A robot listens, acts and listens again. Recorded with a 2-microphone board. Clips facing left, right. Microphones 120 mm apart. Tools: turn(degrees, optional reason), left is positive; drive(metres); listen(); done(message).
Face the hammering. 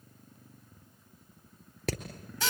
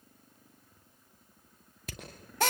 turn(degrees=90)
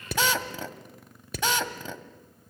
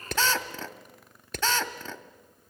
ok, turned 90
done("Facing the hammering.")